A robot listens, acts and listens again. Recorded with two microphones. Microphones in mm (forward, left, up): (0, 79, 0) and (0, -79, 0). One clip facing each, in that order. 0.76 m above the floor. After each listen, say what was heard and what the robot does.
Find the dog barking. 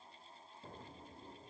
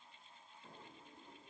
Keep listening.
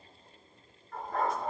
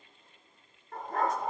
The dog barking: about 45° right or 135° right. Turn 45° right.
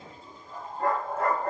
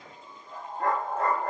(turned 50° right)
Facing the dog barking, over 4 m away.